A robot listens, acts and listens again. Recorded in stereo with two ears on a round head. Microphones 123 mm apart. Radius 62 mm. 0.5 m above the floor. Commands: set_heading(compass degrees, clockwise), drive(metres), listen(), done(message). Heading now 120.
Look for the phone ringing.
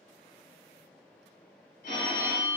set_heading(50)
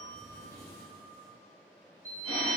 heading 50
set_heading(20)
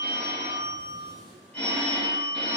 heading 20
set_heading(5)
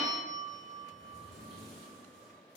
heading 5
done("Facing the phone ringing.")